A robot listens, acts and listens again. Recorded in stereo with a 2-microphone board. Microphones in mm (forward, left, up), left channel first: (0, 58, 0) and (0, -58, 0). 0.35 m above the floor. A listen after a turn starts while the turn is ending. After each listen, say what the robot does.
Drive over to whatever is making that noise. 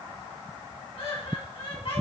Turn 55° left.
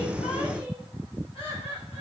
Turn 65° left.
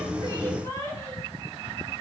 Turn 30° left.
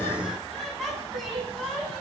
Drive 1.0 m forward.
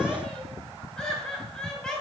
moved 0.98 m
Turn 10° left.
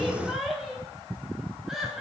Drive 1.0 m forward.
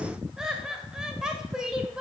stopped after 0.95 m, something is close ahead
Turn 10° right.
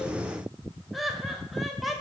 Arrived at the laughter, straight ahead.